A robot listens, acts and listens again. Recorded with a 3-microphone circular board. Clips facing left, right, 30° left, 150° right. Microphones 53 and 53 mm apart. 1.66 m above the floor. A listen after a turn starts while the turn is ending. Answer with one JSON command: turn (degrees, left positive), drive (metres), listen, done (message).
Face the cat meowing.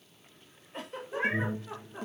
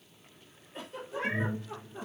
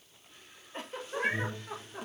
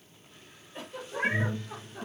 {"turn": 140}
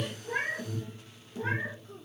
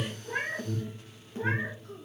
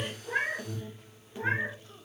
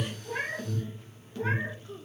{"turn": -25}
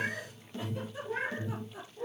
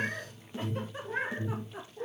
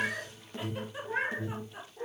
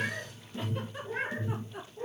{"turn": -30}
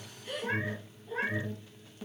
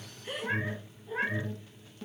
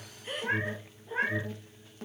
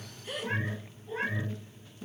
{"turn": -10}
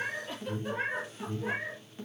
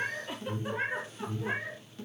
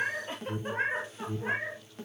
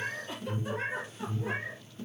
{"done": "Facing the cat meowing."}